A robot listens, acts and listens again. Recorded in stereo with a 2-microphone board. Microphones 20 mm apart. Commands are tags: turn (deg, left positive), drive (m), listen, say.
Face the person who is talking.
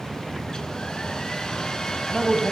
<turn deg="15"/>
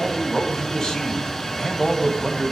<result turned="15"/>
<turn deg="150"/>
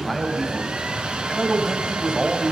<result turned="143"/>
<say>Found it: a man speaking, straight ahead, 2 to 4 m away.</say>